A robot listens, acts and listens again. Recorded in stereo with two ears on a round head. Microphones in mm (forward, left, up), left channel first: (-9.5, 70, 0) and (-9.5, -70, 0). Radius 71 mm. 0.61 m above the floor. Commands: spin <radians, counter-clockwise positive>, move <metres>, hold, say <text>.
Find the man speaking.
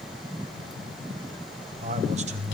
spin -0.79
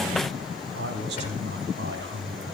spin -1.40
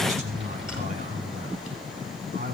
spin -0.79
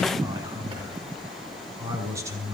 spin -0.35
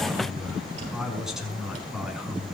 say Facing the man speaking, over 4 m away.